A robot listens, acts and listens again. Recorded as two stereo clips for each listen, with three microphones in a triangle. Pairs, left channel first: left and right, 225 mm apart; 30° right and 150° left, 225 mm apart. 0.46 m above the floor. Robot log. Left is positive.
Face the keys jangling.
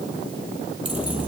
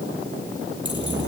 cmd idle
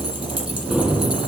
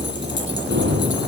note: The keys jangling: 175° right.
cmd yaw -175
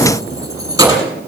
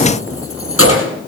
note: The keys jangling is now 15° right.
cmd yaw -15
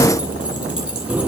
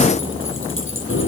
end: Found it: keys jangling, straight ahead.